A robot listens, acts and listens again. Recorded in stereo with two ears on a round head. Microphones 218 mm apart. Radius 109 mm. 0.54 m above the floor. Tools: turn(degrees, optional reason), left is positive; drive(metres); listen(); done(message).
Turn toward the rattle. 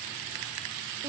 listen()
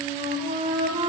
listen()
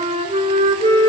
done("I can't make out a rattle, only a flute.")